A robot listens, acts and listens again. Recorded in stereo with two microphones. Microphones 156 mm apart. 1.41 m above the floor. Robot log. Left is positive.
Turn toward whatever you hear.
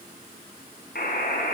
cmd yaw +90
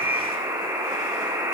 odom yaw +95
note: So it is at 15° right.
cmd yaw -15
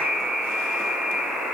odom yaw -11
end: Facing the buzzer.